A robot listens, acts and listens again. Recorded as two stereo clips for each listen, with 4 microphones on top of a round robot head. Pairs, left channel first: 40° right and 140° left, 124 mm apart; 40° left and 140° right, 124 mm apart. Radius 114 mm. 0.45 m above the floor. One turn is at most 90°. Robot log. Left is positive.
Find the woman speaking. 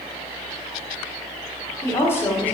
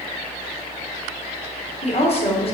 note: The woman speaking: 35° left.
cmd yaw +35
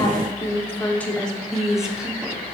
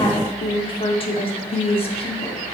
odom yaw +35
note: The woman speaking is now 55° left.
cmd yaw +55
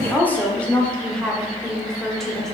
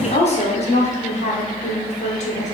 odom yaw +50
note: The woman speaking is now 45° left.
cmd yaw +45
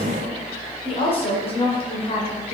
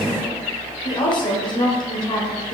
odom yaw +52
end: Found it: a woman speaking, straight ahead, 2 to 4 m away.